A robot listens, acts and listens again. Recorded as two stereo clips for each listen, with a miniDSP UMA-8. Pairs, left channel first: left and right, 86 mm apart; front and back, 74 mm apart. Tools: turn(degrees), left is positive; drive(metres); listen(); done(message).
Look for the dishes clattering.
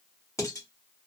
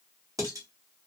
turn(degrees=140)
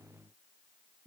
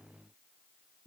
turn(degrees=15)
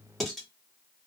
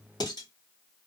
done("Facing the dishes clattering, 1 to 2 m away.")